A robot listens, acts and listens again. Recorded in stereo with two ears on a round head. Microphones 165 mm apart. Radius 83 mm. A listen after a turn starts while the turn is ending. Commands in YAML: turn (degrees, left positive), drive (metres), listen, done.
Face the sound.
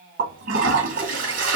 turn: -50
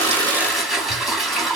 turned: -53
done: "Found it: a toilet flushing, straight ahead, 2 to 4 m away."